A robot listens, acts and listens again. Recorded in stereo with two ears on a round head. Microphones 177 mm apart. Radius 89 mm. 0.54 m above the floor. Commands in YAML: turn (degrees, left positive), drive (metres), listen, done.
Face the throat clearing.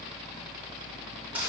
listen: true
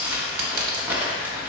listen: true
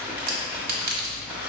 done: "I can't make out throat clearing, only crumpling and a clink."